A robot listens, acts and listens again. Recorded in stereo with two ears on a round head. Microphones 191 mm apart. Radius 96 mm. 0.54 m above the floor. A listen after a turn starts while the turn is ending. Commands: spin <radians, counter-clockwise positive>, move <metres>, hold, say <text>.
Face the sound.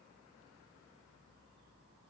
hold
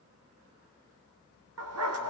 spin -1.57
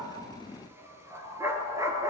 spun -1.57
spin -0.26
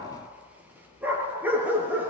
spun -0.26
spin -0.17
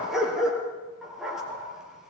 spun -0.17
say Facing the dog barking.